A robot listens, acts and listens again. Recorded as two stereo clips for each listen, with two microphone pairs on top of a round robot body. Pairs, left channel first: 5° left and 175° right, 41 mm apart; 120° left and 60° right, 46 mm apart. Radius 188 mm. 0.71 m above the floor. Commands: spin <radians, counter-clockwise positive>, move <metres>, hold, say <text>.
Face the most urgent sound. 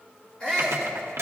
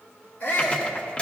spin 1.22
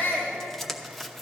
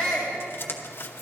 spin -0.52
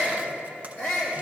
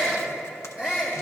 spin 0.26
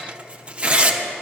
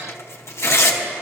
hold
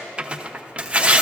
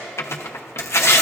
hold
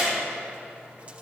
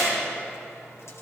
say Facing where the shout came from. I can't hear it now.